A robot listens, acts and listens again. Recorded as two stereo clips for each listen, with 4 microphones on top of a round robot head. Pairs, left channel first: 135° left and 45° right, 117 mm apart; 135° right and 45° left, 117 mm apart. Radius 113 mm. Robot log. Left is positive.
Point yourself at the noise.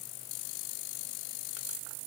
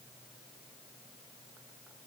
cmd idle
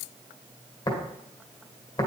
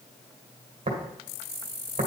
note: The tapping: 85° left.
cmd yaw +85
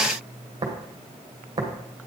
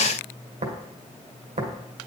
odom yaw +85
note: The tapping is now 15° left.
cmd yaw +15
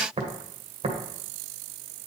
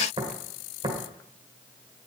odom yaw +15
end: Facing the tapping.